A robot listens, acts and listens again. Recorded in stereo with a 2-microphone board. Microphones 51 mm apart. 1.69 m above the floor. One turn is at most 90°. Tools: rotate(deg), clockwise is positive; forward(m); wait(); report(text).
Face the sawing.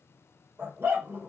wait()
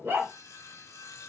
rotate(-90)
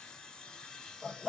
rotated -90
rotate(-15)
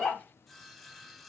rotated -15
report("Found it: sawing, straight ahead.")